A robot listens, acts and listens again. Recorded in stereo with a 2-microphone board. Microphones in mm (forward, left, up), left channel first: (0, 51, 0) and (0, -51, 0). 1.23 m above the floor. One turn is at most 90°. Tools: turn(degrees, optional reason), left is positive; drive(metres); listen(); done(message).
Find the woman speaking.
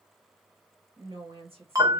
turn(degrees=-70, reason="The woman speaking: about 70° right or 110° right.")
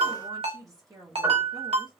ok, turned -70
turn(degrees=-35, reason="So it is at 35° right.")
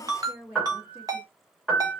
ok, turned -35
turn(degrees=-15, reason="The woman speaking is now 15° right.")
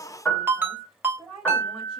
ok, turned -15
done("Found it: a woman speaking, straight ahead.")